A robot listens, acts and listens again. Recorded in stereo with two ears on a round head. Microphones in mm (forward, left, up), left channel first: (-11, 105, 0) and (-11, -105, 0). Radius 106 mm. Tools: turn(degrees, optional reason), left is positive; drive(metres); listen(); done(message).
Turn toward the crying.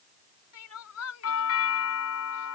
turn(degrees=70, reason="The crying: about 70° left or 110° left.")
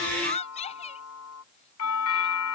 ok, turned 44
turn(degrees=30, reason="So it is at 30° left.")
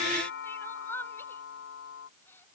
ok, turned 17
turn(degrees=10, reason="The crying is now 10° left.")
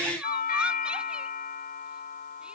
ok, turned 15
listen()
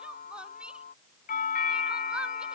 listen()
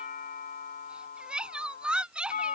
done("Found it: crying, straight ahead.")